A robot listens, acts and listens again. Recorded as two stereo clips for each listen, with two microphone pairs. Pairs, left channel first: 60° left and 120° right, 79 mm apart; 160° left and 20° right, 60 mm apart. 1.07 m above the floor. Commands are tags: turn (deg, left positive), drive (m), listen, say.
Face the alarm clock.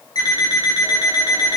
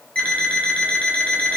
<turn deg="90"/>
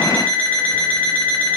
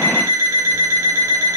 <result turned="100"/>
<turn deg="-10"/>
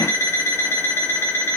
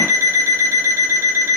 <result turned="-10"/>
<say>Facing the alarm clock, 1 to 2 m away.</say>